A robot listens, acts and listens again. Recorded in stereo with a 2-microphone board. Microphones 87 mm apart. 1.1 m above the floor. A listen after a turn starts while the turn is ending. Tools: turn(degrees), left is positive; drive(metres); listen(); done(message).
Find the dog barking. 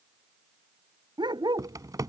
turn(degrees=-60)
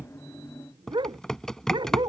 turn(degrees=-65)
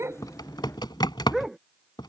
done("Found it: a dog barking, straight ahead.")